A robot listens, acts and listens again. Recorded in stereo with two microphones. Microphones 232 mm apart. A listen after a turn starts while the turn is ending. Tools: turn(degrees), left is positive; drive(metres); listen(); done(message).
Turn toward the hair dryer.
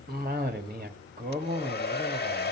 turn(degrees=45)
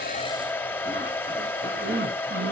turn(degrees=10)
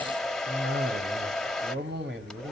done("Found it: a hair dryer, straight ahead, 1 to 2 m away.")